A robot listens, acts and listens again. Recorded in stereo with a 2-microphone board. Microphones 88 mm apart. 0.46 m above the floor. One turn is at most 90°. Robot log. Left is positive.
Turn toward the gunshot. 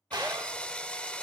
note: The gunshot: about 55° right or 125° right.
cmd yaw -55
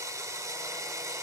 cmd idle
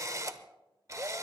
end: I heard a gunshot, but can't make it out now. It was about straight ahead or 70° right.